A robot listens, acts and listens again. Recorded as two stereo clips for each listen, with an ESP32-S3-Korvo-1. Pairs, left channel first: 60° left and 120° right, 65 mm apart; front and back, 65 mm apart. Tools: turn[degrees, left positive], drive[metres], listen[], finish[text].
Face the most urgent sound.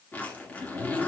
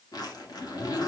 Action: listen[]
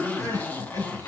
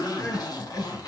Thought: The crying: 40° left.
Action: turn[40]
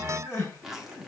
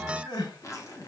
Action: finish[Facing the crying, 2 to 4 m away.]